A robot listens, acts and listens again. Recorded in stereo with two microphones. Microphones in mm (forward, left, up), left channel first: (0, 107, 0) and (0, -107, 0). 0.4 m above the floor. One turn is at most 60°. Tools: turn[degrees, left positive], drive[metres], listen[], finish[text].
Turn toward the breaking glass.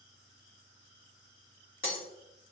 Thought: The breaking glass: about 70° left or 110° left.
Action: turn[60]
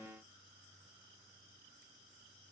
Action: listen[]
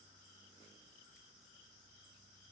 Action: finish[I heard breaking glass, but can't make it out now. It was about 10° left or 50° left.]